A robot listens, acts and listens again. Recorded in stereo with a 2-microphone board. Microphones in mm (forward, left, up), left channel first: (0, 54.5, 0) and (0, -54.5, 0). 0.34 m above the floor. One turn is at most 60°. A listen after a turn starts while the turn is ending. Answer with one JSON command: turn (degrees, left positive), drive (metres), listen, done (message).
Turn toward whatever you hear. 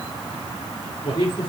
{"turn": 45}
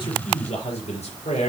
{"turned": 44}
{"turn": 60}
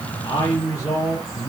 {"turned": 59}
{"turn": 30}
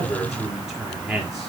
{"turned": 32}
{"done": "Facing the man speaking, over 4 m away."}